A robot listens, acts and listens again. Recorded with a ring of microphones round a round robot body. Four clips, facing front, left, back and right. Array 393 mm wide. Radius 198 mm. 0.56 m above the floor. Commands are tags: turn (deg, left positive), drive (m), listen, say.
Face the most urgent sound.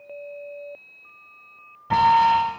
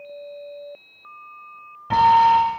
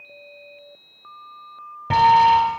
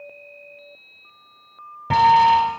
<turn deg="-135"/>
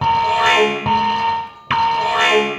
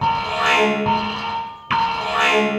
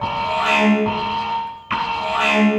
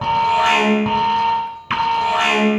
<say>Found it: an alarm, straight ahead.</say>